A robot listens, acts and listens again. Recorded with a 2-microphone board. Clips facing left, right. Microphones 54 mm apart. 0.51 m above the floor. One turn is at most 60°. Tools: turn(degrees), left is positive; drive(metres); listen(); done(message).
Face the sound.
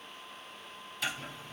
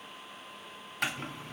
turn(degrees=-55)
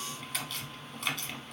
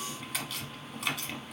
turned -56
done("Facing the chopping, under 1 m away.")